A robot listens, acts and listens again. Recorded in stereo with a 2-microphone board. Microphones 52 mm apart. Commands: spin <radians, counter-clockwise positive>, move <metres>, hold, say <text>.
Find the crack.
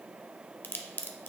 spin 0.79
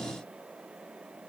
hold
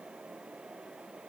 say I heard a crack, but can't make it out now. It was about straight ahead or 90° left.